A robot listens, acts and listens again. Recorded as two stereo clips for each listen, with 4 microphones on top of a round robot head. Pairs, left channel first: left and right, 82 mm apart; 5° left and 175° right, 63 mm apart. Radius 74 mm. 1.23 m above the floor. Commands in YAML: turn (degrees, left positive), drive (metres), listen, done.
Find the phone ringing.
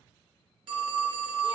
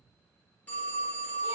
turn: -65
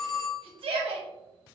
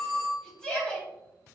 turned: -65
done: "Facing the phone ringing, under 1 m away."